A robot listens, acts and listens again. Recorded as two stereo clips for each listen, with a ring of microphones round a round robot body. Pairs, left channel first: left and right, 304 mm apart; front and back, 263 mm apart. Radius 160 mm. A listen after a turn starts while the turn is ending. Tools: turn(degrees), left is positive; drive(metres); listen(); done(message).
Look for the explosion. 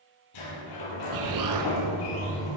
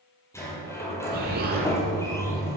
turn(degrees=-120)
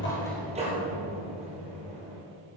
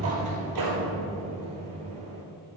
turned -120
done("I heard an explosion from this way, but can't make it out now.")